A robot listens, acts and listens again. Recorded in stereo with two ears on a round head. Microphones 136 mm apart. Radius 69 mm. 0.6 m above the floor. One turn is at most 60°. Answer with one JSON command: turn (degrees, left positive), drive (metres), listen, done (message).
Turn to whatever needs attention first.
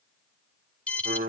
{"turn": 30}
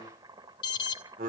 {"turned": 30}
{"turn": 60}
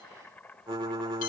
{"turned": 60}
{"turn": 60}
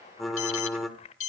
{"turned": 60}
{"turn": 60}
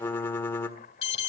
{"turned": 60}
{"turn": 45}
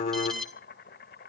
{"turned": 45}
{"done": "Found it: an alarm, straight ahead."}